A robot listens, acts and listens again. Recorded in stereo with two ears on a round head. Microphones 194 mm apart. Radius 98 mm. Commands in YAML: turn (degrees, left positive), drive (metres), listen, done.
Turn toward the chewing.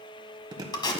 turn: -20
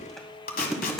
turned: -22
done: "Facing the chewing, 1 to 2 m away."